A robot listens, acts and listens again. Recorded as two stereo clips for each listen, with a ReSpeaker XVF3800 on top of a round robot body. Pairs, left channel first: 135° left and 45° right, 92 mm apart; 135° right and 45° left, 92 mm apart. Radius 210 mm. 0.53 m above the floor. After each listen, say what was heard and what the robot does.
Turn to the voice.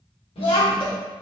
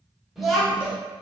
The child speaking: 135° left. Turn 135° left.
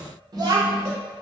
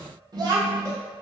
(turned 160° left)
Facing the child speaking.